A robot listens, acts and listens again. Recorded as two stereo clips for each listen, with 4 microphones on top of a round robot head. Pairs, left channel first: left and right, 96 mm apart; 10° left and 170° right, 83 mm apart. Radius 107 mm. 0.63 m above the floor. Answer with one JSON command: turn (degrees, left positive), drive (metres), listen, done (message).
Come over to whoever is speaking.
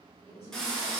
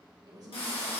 {"turn": 155}
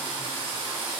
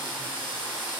{"listen": true}
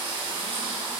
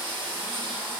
{"listen": true}
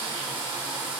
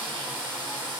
{"done": "Facing where the woman speaking came from. I can't hear it now. I did not reach it."}